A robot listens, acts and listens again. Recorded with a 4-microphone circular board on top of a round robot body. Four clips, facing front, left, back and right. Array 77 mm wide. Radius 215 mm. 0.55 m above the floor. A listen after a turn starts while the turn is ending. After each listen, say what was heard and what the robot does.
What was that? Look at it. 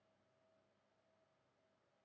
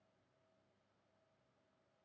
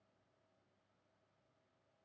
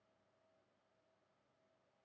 Keep listening.
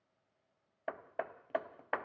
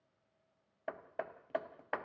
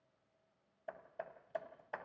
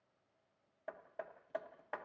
The hammering: 20° left. Turn 20° left.
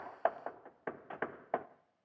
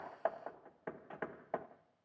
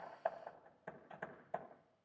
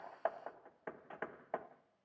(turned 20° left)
Found it: hammering, straight ahead, under 1 m away.